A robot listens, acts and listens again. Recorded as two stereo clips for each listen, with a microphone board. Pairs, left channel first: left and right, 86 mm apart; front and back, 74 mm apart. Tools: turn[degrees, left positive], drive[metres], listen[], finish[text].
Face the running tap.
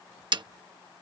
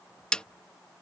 Action: listen[]
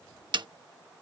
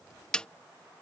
Action: listen[]
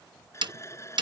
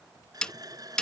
Thought: The running tap: 145° left.
Action: turn[145]
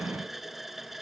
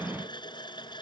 Action: finish[Found it: a running tap, straight ahead.]